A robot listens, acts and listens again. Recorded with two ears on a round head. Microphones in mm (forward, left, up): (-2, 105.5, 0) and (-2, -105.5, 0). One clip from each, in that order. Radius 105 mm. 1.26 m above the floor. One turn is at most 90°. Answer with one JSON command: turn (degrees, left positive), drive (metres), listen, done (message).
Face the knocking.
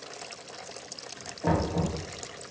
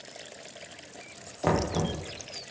{"turn": -65}
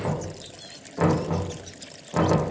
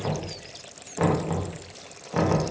{"done": "Found it: knocking, straight ahead."}